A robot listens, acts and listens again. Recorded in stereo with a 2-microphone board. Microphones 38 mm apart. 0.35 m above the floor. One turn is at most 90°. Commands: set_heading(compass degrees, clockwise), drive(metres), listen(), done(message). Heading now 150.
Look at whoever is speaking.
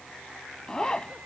listen()
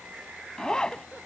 listen()
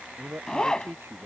set_heading(240)
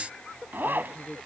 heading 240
set_heading(230)
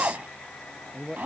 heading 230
done("Facing the man speaking.")